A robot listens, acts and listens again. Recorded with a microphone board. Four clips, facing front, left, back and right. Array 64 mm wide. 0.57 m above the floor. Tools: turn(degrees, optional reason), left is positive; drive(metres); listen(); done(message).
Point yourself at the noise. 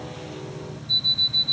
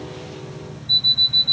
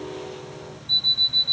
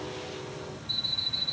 turn(degrees=135, reason="The alarm clock: 135° left.")
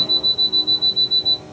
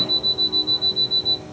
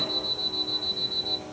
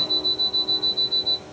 turn(degrees=40, reason="The alarm clock is now 40° left.")
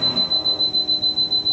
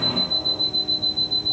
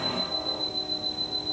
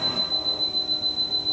done("Facing the alarm clock, 1 to 2 m away.")